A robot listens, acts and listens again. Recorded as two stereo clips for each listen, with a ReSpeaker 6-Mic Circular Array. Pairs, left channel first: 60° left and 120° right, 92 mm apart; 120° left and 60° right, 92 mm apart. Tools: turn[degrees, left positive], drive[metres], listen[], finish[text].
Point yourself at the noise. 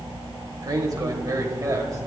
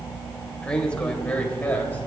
Thought: The man speaking: 170° right.
Action: turn[-170]
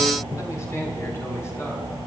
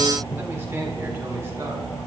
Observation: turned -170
Action: finish[Found it: a man speaking, straight ahead, over 4 m away.]